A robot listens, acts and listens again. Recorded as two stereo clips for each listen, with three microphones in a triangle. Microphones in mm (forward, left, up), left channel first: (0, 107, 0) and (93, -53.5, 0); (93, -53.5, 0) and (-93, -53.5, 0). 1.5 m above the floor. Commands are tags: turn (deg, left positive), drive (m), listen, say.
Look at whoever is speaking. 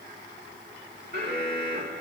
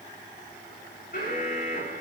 <listen/>
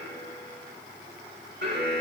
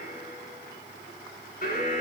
<listen/>
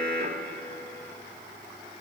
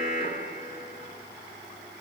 <say>I can't make out anyone speaking, only an alarm.</say>